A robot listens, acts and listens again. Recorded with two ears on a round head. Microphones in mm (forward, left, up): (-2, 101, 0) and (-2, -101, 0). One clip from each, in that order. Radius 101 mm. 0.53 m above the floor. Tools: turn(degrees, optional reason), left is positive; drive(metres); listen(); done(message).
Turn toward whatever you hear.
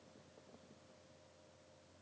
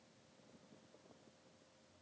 listen()
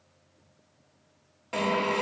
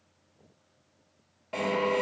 turn(degrees=30, reason="The drill: about 30° left or 150° left.")
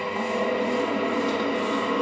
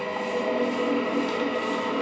done("Facing the drill.")